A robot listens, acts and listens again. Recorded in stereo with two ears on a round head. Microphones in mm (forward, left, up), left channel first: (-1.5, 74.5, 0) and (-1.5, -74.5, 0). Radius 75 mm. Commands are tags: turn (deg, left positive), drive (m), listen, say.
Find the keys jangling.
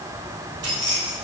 <turn deg="-90"/>
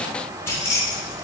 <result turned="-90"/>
<turn deg="20"/>
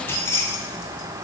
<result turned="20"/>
<turn deg="20"/>
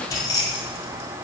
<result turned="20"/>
<turn deg="30"/>
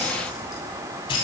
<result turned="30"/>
<turn deg="30"/>
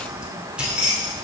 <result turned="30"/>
<say>Found it: keys jangling, straight ahead, 2 to 4 m away.</say>